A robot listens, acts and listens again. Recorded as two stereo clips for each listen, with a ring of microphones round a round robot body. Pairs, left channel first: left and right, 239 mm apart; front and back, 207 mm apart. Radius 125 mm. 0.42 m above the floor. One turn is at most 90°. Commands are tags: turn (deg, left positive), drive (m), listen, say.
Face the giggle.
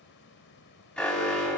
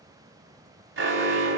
<listen/>
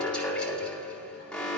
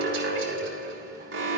<listen/>
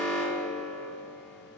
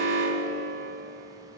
<say>I can't make out a giggle to turn to.</say>